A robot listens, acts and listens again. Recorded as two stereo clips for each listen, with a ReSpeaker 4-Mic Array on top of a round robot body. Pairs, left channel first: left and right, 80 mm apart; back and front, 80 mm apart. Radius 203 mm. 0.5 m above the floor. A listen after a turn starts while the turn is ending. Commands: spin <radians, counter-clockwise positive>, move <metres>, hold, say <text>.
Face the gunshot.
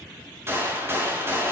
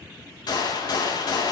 spin -2.62
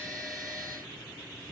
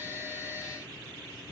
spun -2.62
say I heard a gunshot from this way, but can't make it out now.